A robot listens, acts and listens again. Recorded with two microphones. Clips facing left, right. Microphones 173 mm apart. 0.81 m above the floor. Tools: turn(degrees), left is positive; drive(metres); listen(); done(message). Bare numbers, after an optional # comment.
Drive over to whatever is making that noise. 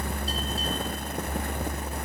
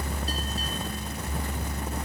listen()
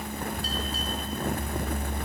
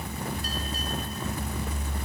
listen()
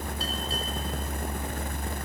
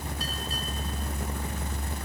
done("I can't make out anything to turn to.")